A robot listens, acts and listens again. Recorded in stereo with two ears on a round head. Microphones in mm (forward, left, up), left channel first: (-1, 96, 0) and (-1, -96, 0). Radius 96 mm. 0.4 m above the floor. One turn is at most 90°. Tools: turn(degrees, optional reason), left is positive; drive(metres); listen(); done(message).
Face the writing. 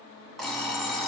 listen()
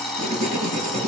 turn(degrees=-35, reason="The writing: about 35° right or 145° right.")
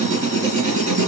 turn(degrees=-90, reason="So it is at 105° right.")
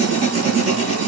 turn(degrees=-35, reason="The writing is now 35° right.")
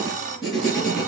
done("Found it: writing, straight ahead, 2 to 4 m away.")